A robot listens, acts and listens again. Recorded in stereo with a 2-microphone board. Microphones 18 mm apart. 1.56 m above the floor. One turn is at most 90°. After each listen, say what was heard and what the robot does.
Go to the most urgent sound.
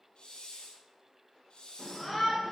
Turn 30° right.
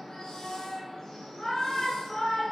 So it is at 25° left. Turn 25° left.
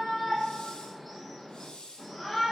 The shout is now 10° right. Turn 10° right.
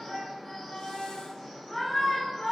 Drive 1.0 m forward.
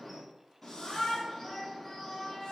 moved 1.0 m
Drive 1.0 m forward.
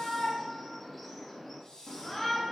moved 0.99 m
Drive 1.0 m forward.
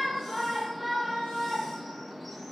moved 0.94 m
Drive 1.0 m forward.
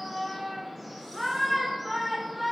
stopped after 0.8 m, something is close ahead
Arrived at the shout, straight ahead.